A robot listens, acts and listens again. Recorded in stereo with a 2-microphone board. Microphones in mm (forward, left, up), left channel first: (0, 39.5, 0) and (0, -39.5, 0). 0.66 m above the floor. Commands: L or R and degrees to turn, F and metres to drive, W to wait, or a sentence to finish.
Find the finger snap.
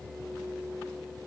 W
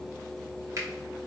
R45
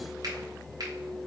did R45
R80
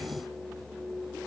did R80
W
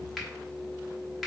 Facing the finger snap, 1 to 2 m away.